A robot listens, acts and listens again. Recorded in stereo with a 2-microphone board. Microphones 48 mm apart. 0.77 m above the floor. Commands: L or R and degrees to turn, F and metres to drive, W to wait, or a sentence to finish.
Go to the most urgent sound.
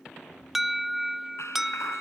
R30
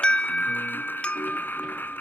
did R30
L25
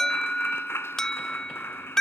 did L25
L10
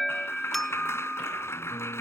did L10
F1.0
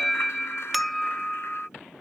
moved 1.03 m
F1.0
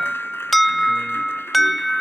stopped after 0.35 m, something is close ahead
I am next to the alarm.